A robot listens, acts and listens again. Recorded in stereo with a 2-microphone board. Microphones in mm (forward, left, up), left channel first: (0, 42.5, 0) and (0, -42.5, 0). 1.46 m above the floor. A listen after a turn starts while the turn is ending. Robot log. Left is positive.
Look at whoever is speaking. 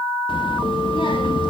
note: The child speaking: about 70° left or 110° left.
cmd yaw +70
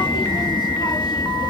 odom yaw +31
note: So it is at 55° left.
cmd yaw +55
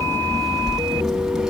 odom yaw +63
end: Found it: a child speaking, straight ahead.